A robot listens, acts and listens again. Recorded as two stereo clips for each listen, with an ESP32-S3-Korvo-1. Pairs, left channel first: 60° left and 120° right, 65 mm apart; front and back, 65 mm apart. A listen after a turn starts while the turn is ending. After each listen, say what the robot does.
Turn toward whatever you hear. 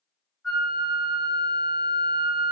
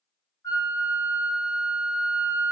Turn 40° right.
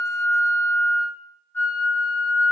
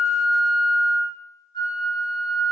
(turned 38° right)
Facing the flute, 1 to 2 m away.